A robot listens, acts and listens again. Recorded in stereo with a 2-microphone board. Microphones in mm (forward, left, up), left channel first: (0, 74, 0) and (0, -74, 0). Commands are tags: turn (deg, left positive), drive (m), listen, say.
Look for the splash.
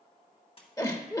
<turn deg="40"/>
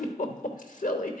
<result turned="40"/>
<listen/>
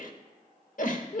<say>I heard a splash, but can't make it out now. It was about straight ahead or 100° left.</say>